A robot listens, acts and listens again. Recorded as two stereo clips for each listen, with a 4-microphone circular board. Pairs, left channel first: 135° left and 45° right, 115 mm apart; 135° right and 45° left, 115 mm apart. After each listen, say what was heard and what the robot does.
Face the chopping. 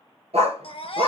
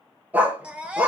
Keep listening.
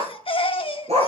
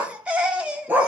Keep listening.
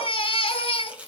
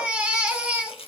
The chopping: 120° right. Turn 120° right.
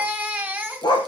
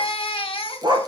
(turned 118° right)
Keep listening.
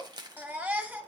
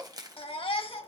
Found it: chopping, straight ahead.